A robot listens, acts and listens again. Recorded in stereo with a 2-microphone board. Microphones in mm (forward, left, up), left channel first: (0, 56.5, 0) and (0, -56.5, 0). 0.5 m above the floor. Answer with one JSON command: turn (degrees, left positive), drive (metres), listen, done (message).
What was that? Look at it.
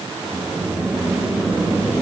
{"turn": -15}
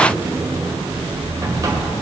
{"turn": -150}
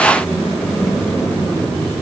{"turn": 10}
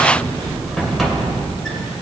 {"done": "Facing the sliding door, 1 to 2 m away."}